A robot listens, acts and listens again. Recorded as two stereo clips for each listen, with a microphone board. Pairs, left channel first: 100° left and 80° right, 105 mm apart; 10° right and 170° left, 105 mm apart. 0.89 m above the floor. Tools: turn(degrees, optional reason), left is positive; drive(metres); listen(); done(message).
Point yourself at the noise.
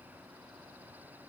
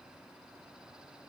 listen()
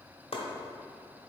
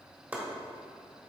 turn(degrees=95, reason="The chopping: 95° left.")
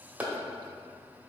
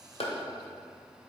done("Found it: chopping, straight ahead, 1 to 2 m away.")